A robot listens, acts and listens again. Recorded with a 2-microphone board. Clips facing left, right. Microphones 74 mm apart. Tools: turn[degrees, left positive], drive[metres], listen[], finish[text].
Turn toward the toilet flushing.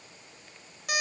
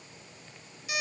Action: listen[]
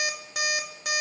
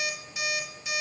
Action: listen[]
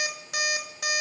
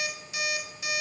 Action: finish[I can't make out a toilet flushing to turn to.]